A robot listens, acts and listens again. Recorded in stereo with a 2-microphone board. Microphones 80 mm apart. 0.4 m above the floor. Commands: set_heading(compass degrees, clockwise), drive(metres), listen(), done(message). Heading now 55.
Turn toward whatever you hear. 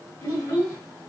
set_heading(30)
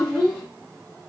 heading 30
done("Found it: a child speaking, straight ahead.")